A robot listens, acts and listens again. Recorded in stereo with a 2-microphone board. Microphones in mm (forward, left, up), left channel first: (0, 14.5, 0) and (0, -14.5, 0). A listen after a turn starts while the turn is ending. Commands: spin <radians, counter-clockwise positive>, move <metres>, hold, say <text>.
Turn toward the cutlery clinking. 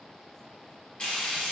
hold
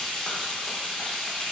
hold
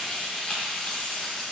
say I can't make out cutlery clinking to turn to.